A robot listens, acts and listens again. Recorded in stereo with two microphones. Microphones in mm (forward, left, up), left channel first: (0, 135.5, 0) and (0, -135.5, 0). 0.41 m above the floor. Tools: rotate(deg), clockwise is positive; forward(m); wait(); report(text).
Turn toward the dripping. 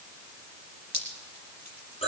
rotate(90)
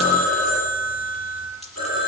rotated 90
wait()
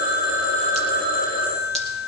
wait()
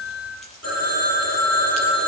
report("Facing where the dripping came from. I can't hear it now.")